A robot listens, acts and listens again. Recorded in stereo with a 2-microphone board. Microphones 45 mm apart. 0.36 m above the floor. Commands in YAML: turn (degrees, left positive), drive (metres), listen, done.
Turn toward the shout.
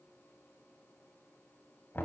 listen: true
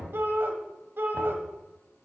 turn: -55
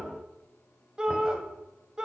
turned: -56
turn: -20
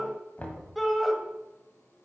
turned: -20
done: "Facing the shout, 1 to 2 m away."